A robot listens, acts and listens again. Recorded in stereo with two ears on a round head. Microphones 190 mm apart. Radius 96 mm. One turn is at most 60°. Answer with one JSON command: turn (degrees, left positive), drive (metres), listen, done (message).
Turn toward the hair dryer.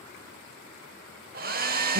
{"turn": -40}
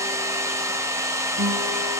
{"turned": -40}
{"turn": -15}
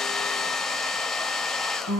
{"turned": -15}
{"done": "Found it: a hair dryer, straight ahead."}